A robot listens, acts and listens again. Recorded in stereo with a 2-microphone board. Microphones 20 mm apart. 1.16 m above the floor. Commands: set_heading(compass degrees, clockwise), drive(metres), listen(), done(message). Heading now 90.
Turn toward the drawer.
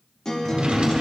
set_heading(140)
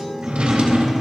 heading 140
set_heading(215)
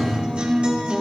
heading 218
done("Found it: a drawer, straight ahead, 1 to 2 m away.")